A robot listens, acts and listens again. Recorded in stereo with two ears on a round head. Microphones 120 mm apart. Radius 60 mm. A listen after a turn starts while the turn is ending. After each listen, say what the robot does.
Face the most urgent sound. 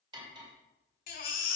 Turn 70° left.
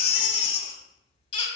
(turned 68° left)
Turn 40° left.
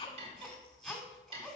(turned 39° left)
Found it: a baby crying, straight ahead.